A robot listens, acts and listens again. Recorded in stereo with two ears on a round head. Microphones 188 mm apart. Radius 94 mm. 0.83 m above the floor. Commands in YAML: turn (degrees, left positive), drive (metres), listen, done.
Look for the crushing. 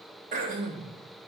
listen: true
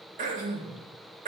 listen: true
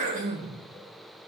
done: "I can't make out crushing, only throat clearing."